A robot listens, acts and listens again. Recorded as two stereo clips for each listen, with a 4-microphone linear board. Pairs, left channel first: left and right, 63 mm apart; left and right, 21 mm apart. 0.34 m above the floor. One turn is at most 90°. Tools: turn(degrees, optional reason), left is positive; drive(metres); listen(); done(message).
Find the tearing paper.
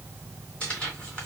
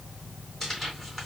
turn(degrees=30)
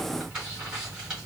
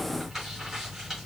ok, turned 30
turn(degrees=-15, reason="So it is at 15° right.")
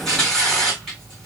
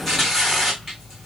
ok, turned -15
done("Facing the tearing paper, 2 to 4 m away.")